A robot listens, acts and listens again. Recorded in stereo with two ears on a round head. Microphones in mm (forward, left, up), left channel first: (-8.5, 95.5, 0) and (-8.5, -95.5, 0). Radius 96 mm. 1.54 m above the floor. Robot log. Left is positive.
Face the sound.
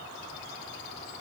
cmd idle
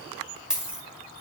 cmd yaw -30
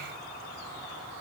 cmd idle
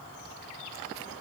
end: I heard a dropped coin, but can't make it out now. It was about 25° left or 145° right.